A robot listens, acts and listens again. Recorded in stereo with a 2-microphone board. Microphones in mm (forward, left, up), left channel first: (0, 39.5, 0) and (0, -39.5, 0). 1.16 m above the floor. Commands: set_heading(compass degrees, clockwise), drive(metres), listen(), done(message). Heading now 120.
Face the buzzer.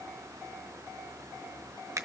listen()
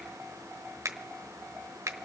listen()
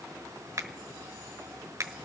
done("I can't make out a buzzer, only a finger snap.")